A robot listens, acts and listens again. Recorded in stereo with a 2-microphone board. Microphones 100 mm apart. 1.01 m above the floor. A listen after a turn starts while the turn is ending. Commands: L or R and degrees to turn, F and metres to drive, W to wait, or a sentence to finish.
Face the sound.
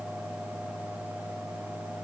W
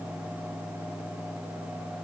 W
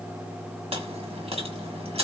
R90
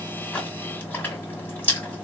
L15
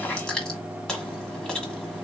Facing the chewing, 1 to 2 m away.